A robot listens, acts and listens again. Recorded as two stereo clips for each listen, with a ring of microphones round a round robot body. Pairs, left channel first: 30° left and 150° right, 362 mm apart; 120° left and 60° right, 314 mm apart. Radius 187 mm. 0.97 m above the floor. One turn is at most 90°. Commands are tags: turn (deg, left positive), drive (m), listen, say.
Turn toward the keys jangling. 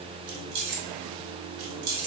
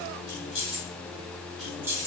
<turn deg="-90"/>
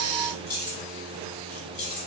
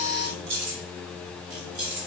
<turn deg="-25"/>
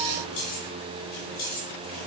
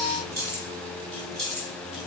<turn deg="10"/>
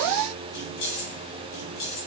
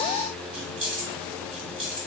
<say>Facing the keys jangling, 2 to 4 m away.</say>